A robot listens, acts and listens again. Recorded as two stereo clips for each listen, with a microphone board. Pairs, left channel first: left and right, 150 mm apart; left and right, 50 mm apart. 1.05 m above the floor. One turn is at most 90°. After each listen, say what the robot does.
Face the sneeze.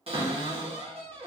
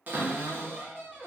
Keep listening.
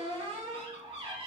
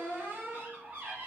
Keep listening.
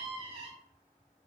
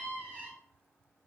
I can't make out a sneeze, only a cupboard door.